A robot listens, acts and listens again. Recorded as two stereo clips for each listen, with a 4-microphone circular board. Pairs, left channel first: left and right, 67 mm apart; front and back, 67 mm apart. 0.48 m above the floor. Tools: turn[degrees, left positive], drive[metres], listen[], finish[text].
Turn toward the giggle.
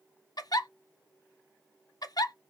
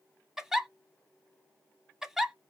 Thought: The giggle: 95° left.
Action: turn[95]
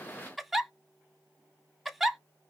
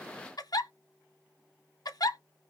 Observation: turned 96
Action: finish[Found it: a giggle, straight ahead.]